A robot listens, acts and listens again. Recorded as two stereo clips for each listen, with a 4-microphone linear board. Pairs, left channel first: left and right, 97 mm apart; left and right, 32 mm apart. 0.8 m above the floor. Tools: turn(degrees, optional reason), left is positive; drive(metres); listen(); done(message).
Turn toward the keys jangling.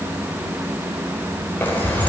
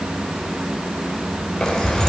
turn(degrees=15, reason="The keys jangling: about 15° left or 165° left.")
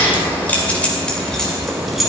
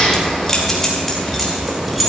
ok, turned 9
turn(degrees=30)
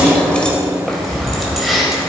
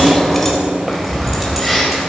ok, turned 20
turn(degrees=30)
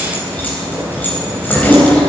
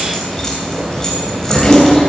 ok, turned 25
turn(degrees=20, reason="The keys jangling: about 20° left or 160° left.")
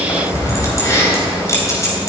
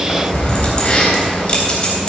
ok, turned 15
turn(degrees=150, reason="So it is at 150° left.")
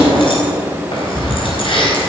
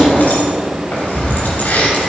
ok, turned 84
turn(degrees=60, reason="The keys jangling is now 60° left.")
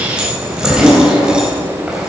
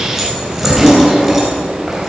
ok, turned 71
turn(degrees=-10, reason="The keys jangling is now 10° right.")
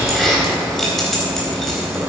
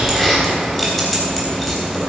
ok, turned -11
done("Facing the keys jangling, 2 to 4 m away.")